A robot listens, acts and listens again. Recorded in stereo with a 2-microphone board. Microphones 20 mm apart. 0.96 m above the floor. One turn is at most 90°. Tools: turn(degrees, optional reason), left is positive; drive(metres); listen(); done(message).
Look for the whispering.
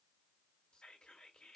turn(degrees=65, reason="The whispering: about 65° left or 115° left.")
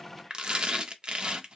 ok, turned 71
listen()
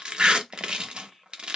turn(degrees=10, reason="So it is at 10° left.")
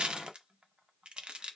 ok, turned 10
listen()
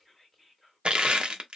done("Found it: whispering, straight ahead, 1 to 2 m away.")